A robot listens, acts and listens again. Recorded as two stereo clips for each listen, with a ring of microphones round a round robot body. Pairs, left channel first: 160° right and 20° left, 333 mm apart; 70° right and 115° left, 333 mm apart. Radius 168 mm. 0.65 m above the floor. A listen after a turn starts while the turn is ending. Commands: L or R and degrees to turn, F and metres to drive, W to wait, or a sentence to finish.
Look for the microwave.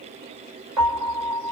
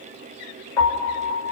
W
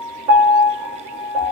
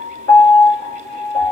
W
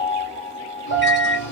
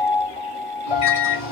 R100
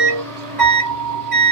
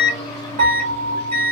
L15
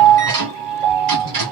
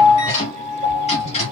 Found it: a microwave, straight ahead.